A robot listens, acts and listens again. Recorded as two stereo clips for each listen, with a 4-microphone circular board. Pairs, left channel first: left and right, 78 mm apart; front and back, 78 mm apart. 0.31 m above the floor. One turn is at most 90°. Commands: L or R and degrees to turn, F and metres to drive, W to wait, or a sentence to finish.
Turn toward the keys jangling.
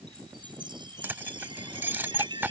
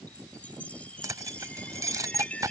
R90
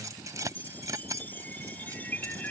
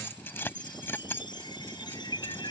R55
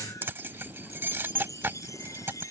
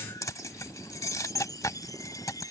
R30
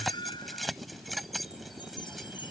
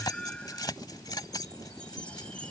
Facing the keys jangling.